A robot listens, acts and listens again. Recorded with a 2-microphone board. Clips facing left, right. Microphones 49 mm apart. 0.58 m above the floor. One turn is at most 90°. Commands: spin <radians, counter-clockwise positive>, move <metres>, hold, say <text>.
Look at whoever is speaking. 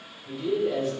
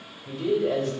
spin -1.13
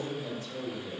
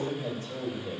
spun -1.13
spin -0.87
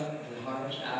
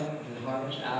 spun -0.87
spin -0.26
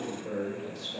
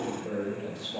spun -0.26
spin -0.26
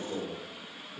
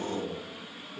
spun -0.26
spin -0.17
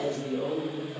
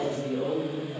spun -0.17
spin -0.17
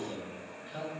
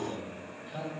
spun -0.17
say Found it: a man speaking, straight ahead.